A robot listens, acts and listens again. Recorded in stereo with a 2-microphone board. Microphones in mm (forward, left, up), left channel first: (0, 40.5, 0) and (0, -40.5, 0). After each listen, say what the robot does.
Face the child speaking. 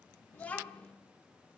Turn 30° left.
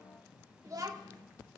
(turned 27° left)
Turn 55° right.
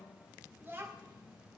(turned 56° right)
Turn 30° right.
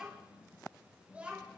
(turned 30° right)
Turn 20° right.
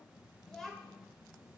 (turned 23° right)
Found it: a child speaking, straight ahead.